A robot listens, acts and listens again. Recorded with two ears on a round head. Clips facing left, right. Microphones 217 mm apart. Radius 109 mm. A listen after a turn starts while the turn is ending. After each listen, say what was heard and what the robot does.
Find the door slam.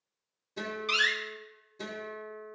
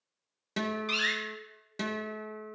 The door slam: about 20° left or 160° left. Turn 20° left.
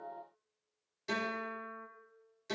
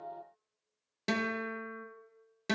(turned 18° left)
Keep listening.
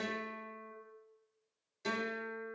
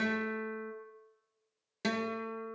I heard a door slam, but can't make it out now. It was about straight ahead or 145° left.